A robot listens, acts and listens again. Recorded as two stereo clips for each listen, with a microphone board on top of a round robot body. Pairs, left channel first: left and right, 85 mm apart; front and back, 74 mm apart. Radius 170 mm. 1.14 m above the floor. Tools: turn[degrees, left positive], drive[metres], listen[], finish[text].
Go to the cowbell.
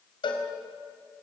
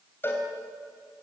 Thought: The cowbell: 65° left.
Action: turn[65]
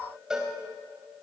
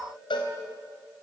Action: drive[1.0]
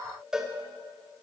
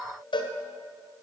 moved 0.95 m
Action: drive[1.0]
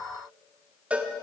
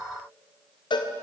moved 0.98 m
Thought: The cowbell is now 15° right.
Action: turn[-15]
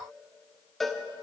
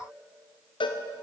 Action: drive[1.0]
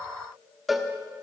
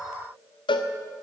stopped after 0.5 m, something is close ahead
Action: finish[I am next to the cowbell.]